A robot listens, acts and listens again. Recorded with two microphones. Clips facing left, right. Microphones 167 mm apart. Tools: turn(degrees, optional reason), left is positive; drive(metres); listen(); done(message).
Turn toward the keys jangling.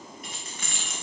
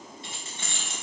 turn(degrees=-30, reason="The keys jangling: about 30° right or 150° right.")
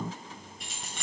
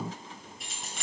done("Facing the keys jangling, 2 to 4 m away.")